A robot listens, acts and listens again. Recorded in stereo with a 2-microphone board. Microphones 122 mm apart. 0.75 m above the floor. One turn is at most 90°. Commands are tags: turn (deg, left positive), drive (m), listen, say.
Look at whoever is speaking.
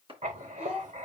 <turn deg="-30"/>
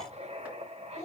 <turn deg="20"/>
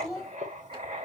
<say>Facing the child speaking.</say>